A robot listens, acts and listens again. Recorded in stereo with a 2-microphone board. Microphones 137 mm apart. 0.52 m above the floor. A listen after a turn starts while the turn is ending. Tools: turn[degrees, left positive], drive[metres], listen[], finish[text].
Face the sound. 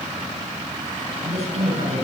Thought: The woman speaking: about 50° right or 130° right.
Action: turn[-50]
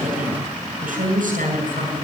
Thought: So it is at 80° right.
Action: turn[-80]
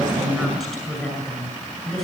Action: finish[Facing the woman speaking, over 4 m away.]